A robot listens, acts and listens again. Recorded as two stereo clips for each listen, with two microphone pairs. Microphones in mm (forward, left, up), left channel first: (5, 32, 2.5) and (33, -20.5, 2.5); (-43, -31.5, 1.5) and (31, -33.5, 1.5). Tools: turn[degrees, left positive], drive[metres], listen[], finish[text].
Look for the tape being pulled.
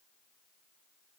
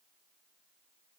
Action: listen[]
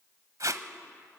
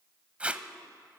Thought: The tape being pulled: 75° right.
Action: turn[-75]
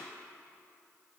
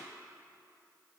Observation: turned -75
Action: listen[]
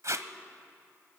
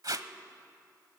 Thought: The tape being pulled is now 35° right.
Action: turn[-35]
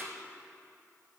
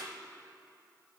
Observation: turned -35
Action: listen[]
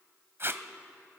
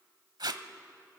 Thought: The tape being pulled is now 15° right.
Action: turn[-15]
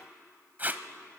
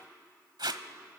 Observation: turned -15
Action: finish[Facing the tape being pulled, 1 to 2 m away.]